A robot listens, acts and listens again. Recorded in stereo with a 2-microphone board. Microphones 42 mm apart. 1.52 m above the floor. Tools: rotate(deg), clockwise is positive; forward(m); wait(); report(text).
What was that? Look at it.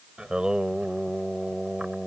rotate(25)
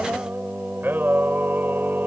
rotate(120)
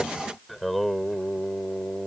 report("Facing the singing.")